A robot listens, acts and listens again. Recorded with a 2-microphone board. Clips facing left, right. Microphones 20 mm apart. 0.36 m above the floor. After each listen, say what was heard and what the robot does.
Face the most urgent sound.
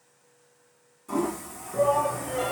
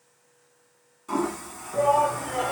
The shout: about 55° right or 125° right. Turn 55° right.
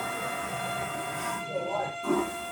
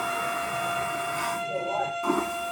So it is at 20° right. Turn 20° right.
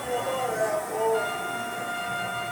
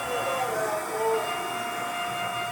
Found it: a shout, straight ahead, 1 to 2 m away.